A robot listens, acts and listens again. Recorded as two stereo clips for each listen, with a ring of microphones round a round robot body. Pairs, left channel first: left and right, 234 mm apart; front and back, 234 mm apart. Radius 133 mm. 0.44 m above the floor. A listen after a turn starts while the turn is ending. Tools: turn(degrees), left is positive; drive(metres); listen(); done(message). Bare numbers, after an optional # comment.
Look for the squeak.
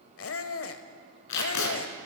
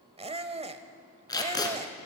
# The squeak: 115° left.
turn(115)
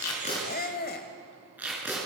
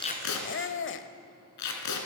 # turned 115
# The squeak is now 35° left.
turn(35)
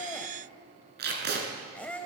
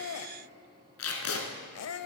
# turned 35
done("Facing the squeak.")